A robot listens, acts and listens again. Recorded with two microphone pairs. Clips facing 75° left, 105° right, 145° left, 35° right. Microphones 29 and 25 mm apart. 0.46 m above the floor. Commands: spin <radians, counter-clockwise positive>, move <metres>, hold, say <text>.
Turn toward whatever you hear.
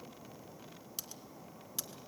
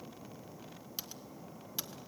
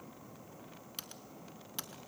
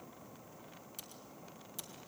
spin 3.14
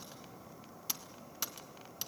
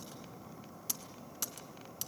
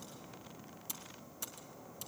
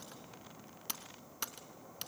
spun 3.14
say Facing the typing on a keyboard, 1 to 2 m away.